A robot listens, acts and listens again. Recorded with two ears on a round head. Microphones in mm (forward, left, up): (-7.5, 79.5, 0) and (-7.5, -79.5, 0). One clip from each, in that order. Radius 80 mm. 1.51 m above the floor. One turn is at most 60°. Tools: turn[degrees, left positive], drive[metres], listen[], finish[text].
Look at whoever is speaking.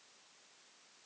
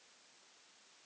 Action: listen[]
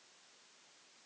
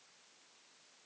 Action: listen[]
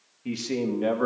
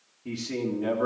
Thought: The man speaking: about 60° left or 120° left.
Action: turn[60]
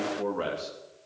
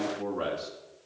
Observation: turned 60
Thought: So it is at 10° left.
Action: turn[10]
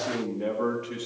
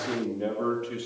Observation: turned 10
Thought: The man speaking is now 10° left.
Action: turn[10]
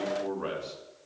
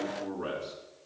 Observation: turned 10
Action: finish[Found it: a man speaking, straight ahead.]